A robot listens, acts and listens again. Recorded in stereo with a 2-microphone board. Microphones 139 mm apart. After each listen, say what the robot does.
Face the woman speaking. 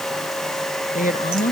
Turn 75° left.
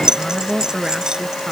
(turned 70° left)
Found it: a woman speaking, straight ahead.